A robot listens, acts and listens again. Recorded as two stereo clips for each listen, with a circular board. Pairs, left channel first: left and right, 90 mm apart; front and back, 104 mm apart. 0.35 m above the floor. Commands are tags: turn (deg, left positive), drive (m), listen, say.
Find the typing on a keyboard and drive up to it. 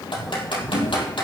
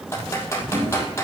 <turn deg="65"/>
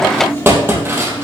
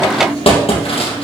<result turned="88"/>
<turn deg="-25"/>
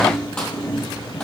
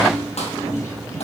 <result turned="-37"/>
<turn deg="15"/>
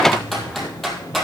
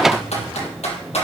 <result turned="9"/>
<drive m="1.0"/>
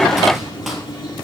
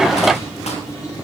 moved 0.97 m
<listen/>
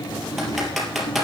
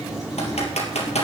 <drive m="1.0"/>
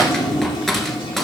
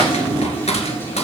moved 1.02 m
<drive m="1.0"/>
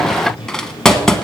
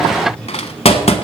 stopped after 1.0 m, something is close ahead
<say>I am next to the typing on a keyboard.</say>